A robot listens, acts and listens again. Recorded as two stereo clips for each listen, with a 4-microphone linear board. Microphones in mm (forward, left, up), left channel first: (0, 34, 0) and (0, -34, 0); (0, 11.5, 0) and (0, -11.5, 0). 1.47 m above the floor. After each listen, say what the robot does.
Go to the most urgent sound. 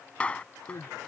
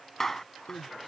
Turn 70° left.
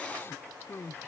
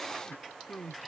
Turn 40° left.
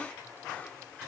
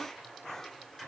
Keep listening.
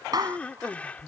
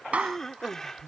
Turn 20° left.
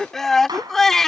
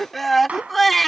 Drive 1.0 m forward.
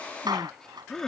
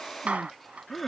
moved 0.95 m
Drive 1.0 m forward.
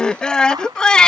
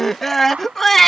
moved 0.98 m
Turn 10° left.
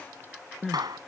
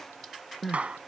Drive 1.0 m forward.
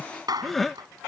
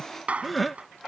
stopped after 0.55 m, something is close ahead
Arrived at the crying, straight ahead.